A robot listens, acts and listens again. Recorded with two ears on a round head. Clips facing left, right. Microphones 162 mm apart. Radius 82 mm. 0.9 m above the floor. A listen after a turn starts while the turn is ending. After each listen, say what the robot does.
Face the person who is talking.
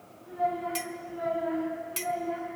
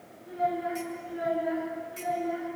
Turn 30° right.
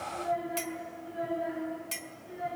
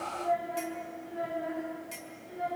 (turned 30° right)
Turn 20° left.
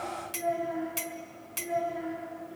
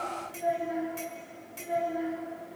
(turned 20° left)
Found it: a child speaking, straight ahead.